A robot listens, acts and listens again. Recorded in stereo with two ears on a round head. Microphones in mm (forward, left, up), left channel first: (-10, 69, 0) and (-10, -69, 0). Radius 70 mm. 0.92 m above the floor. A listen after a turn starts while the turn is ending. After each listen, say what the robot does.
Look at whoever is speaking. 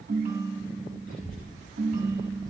Turn 65° left.
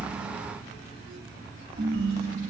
Turn 50° left.
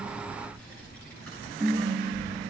Found it: a child speaking, straight ahead.